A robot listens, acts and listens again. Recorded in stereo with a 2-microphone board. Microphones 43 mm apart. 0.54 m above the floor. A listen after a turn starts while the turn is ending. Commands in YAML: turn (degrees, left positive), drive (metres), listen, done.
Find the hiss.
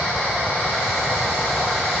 listen: true
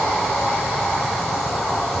listen: true
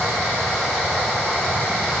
done: "I can't make out a hiss."